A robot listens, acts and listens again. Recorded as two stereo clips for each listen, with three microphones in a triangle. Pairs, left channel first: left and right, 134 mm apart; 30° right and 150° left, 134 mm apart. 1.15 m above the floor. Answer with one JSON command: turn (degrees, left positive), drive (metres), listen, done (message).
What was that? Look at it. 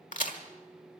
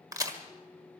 {"turn": 90}
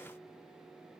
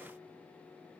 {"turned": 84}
{"done": "I heard a crack from this way, but can't make it out now."}